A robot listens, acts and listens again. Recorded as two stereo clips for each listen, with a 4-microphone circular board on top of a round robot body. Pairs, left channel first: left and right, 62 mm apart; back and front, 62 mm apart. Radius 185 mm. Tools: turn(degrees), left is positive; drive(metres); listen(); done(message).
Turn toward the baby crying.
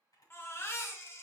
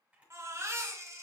turn(degrees=40)
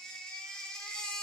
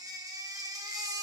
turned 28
turn(degrees=10)
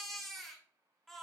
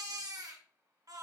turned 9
done("Found it: a baby crying, straight ahead.")